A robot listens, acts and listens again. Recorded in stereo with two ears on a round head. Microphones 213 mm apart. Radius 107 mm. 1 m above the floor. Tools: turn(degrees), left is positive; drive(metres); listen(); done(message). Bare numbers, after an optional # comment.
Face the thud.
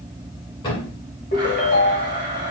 # The thud: about 20° left or 160° left.
turn(20)
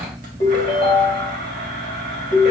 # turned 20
listen()
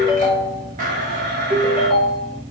done("I heard a thud, but can't make it out now. It was about straight ahead or 140° left.")